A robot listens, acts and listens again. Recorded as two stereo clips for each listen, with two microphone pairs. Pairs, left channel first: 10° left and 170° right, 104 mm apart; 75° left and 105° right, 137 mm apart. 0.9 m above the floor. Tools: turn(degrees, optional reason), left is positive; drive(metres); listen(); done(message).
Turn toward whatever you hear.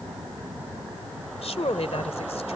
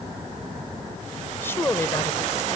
done("Found it: a woman speaking, straight ahead.")